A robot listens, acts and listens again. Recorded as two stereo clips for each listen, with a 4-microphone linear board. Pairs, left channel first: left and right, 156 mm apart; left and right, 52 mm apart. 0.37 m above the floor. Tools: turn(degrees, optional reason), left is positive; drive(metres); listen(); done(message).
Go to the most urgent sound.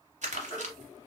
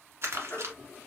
turn(degrees=30, reason="The baby crying: about 30° left or 150° left.")
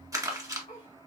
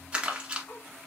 listen()
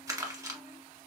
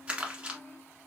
listen()
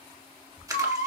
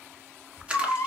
turn(degrees=120, reason="So it is at 120° left.")
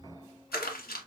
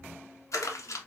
listen()
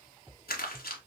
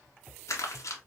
listen()
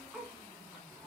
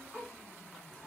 done("Facing where the baby crying came from. I can't hear it now. I did not reach it.")